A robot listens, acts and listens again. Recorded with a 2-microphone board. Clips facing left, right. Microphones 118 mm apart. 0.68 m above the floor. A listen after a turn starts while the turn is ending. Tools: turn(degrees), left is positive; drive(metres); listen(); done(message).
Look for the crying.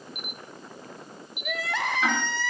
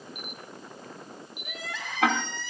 turn(degrees=75)
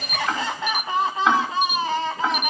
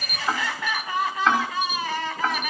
turn(degrees=25)
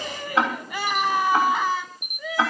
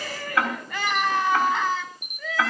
turn(degrees=10)
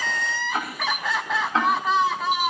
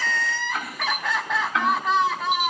done("Found it: crying, straight ahead, 2 to 4 m away.")